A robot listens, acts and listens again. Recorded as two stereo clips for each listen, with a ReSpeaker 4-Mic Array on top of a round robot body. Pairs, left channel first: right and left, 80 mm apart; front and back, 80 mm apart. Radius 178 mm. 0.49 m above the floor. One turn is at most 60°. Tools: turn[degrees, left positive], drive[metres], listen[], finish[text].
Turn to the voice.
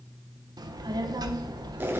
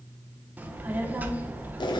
Thought: The child speaking: 115° left.
Action: turn[60]
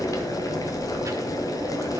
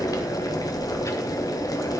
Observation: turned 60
Thought: The child speaking is now 45° left.
Action: turn[45]
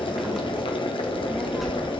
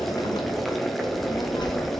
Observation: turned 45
Action: finish[Found it: a child speaking, straight ahead.]